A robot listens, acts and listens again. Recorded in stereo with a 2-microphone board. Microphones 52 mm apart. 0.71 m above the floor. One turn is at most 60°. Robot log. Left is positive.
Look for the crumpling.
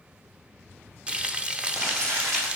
cmd yaw -60
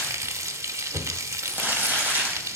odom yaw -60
note: So it is at 30° right.
cmd yaw -30
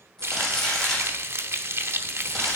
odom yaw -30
note: The crumpling is now 15° left.
cmd yaw +15
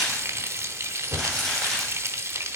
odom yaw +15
note: The crumpling is now 10° left.
cmd yaw +10
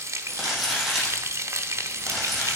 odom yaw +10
end: Facing the crumpling, over 4 m away.